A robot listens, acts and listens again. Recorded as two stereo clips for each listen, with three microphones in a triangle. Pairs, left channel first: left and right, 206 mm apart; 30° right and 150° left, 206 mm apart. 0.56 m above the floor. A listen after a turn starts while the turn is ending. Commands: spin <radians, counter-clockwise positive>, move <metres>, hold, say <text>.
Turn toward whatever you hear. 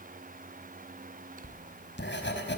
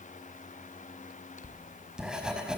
spin 1.13
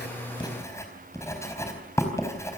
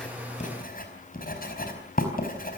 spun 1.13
spin 0.26
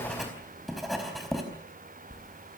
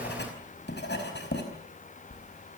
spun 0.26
say Found it: writing, straight ahead, over 4 m away.